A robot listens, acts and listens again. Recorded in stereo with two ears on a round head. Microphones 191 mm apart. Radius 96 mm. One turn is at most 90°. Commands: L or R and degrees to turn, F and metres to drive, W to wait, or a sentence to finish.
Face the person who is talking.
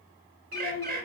L65
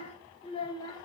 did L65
L20
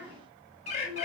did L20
R20
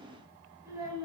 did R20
R15
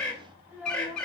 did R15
R10
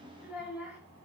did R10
Facing the child speaking, 2 to 4 m away.